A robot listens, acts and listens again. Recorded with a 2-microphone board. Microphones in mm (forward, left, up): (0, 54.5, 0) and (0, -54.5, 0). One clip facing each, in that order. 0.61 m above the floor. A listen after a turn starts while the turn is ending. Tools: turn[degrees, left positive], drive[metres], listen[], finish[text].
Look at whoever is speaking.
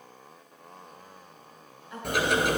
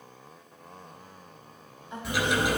Thought: The woman speaking: about 25° right or 155° right.
Action: turn[-25]
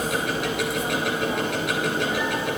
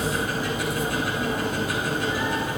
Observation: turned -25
Action: listen[]
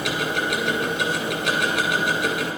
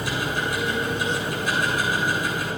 Action: listen[]
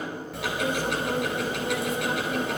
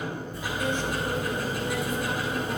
Action: finish[I heard a woman speaking, but can't make it out now. It was about straight ahead or 130° right.]